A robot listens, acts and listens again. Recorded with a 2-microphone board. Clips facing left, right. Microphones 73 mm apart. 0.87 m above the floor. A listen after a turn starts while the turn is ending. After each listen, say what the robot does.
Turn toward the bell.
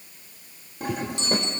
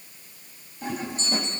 Turn 90° left.
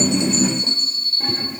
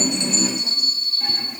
Turn 10° right.
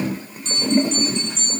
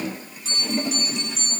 Found it: a bell, straight ahead.